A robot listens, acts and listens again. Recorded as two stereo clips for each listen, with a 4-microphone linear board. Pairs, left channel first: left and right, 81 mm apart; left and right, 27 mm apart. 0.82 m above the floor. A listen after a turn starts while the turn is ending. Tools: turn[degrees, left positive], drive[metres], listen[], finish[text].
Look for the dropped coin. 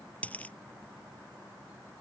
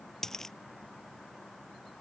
Thought: The dropped coin: about 15° left or 165° left.
Action: turn[15]
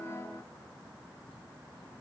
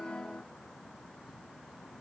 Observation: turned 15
Action: listen[]
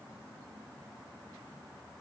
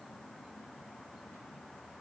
Action: finish[I heard a dropped coin, but can't make it out now. It was about straight ahead or 150° left.]